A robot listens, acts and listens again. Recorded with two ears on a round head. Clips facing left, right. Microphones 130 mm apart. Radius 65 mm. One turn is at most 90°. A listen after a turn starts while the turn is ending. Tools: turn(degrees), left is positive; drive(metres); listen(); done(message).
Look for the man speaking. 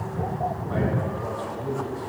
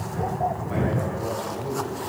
turn(degrees=-20)
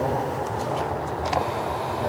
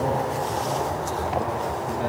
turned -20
turn(degrees=-90)
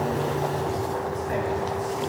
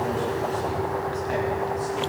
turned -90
turn(degrees=-45)
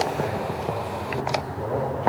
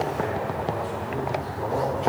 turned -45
done("Facing the man speaking.")